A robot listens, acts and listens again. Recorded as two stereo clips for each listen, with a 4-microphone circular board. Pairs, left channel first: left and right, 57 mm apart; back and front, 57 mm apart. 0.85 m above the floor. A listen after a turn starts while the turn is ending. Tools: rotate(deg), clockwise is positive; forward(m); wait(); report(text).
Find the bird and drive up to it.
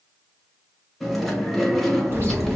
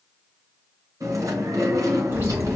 rotate(50)
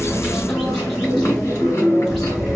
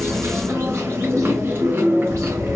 forward(1.0)
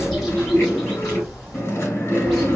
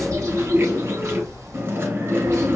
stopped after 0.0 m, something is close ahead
report("Something is in my way. I am facing the bird but have not reached it.")